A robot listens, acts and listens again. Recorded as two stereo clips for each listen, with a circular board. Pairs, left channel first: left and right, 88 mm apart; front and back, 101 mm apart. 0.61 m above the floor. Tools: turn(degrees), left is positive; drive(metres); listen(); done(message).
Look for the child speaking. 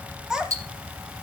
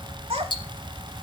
turn(degrees=-175)
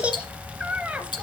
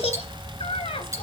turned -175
turn(degrees=-15)
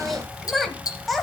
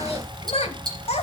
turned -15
done("Facing the child speaking, 1 to 2 m away.")